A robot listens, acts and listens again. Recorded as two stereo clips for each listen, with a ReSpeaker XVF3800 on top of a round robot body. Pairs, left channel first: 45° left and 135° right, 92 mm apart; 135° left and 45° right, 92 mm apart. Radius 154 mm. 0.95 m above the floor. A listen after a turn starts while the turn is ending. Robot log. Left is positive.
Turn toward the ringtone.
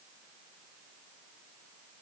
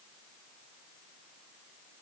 cmd idle
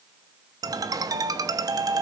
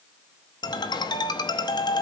note: The ringtone: 175° left.
cmd yaw +175
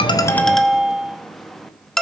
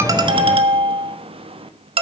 note: The ringtone is now 40° right.
cmd yaw -40
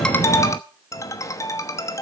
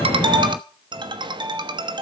note: The ringtone is now 10° right.
cmd yaw -10
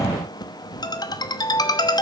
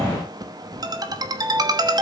end: Facing the ringtone.